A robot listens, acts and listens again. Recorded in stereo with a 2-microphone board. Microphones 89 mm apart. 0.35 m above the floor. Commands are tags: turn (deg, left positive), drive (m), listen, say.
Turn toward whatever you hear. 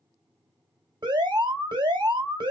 <turn deg="-55"/>
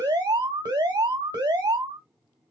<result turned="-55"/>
<turn deg="-60"/>
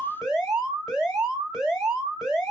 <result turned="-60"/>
<say>Facing the alarm, 2 to 4 m away.</say>